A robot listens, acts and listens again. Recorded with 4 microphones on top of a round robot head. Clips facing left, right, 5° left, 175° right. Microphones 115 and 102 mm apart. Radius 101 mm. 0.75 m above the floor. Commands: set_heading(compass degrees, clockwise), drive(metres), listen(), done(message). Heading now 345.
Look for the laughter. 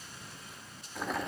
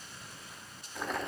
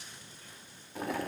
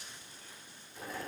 listen()
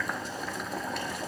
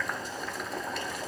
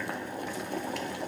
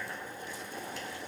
listen()
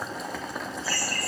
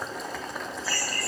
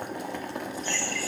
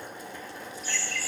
set_heading(250)
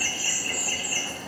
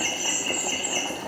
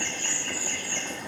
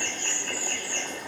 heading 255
done("Found it: laughter, straight ahead, over 4 m away.")